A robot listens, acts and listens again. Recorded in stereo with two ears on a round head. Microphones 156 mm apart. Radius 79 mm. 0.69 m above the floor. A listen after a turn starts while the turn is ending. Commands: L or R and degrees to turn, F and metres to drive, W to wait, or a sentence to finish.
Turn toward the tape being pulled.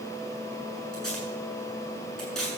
L30
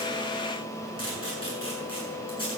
L145
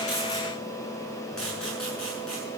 Found it: tape being pulled, straight ahead, over 4 m away.